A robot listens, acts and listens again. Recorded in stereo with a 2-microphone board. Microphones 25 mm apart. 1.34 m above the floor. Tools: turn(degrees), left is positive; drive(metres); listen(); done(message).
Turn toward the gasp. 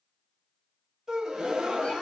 turn(degrees=-30)
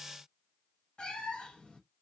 listen()
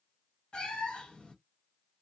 done("I heard a gasp, but can't make it out now. It was about straight ahead or 120° right.")